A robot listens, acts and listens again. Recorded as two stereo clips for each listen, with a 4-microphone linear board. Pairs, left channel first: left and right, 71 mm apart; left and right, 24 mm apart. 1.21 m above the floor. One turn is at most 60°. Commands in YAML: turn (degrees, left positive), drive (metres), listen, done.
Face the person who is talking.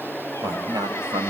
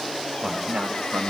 turn: -60
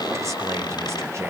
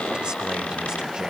turn: -40
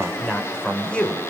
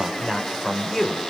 turn: 20
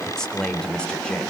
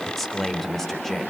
turn: 15
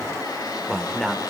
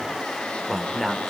done: "Facing the man speaking."